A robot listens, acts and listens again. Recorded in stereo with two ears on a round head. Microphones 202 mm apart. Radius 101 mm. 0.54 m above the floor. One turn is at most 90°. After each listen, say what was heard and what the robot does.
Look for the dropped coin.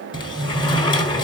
Keep listening.
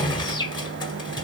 Keep listening.
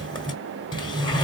I can't make out a dropped coin, only a sliding door.